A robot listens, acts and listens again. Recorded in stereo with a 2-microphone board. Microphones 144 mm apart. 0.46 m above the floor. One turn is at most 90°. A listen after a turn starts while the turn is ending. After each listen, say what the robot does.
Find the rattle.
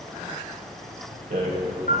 Turn 65° right.
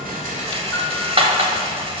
Turn 45° right.
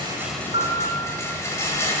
Turn 20° left.
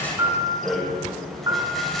Facing the rattle.